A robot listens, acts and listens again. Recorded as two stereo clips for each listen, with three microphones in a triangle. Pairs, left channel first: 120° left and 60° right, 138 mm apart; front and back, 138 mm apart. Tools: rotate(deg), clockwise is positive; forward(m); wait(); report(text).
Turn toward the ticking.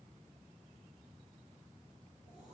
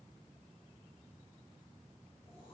wait()
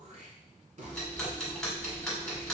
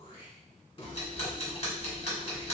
rotate(-35)
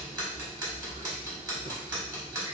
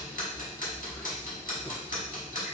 report("Found it: ticking, straight ahead, 1 to 2 m away.")